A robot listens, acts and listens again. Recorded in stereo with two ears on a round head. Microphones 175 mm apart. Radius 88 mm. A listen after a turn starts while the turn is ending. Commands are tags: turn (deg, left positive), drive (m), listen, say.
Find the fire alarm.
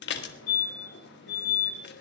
<turn deg="90"/>
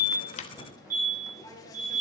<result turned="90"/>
<turn deg="-10"/>
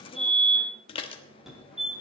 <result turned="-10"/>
<say>Facing the fire alarm.</say>